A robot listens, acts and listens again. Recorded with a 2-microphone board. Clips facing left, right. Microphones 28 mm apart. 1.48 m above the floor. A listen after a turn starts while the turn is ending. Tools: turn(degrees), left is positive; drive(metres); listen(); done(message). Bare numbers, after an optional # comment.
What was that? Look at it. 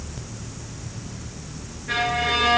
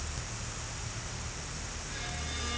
turn(90)
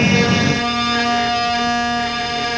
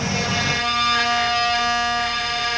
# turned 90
done("Found it: a violin, straight ahead, 1 to 2 m away.")